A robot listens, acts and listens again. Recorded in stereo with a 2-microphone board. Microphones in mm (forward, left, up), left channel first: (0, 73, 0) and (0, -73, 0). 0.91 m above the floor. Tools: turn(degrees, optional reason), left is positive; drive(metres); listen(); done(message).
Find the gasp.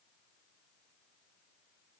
listen()
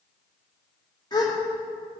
turn(degrees=25, reason="The gasp: about 25° left or 155° left.")
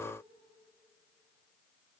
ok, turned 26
listen()
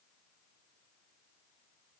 done("I heard a gasp, but can't make it out now. It was about straight ahead or 125° left.")